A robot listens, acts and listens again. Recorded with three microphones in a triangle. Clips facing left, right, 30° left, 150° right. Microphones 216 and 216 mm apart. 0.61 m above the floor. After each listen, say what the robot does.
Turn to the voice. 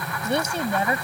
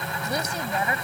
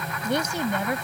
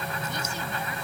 Turn 30° left.
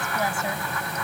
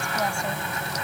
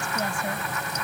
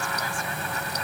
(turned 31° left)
Keep listening.
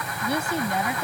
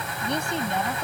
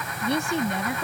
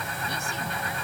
Turn 10° left.
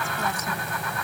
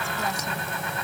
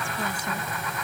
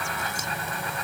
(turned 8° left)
Keep listening.
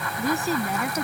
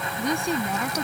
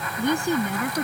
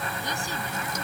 Facing the woman speaking.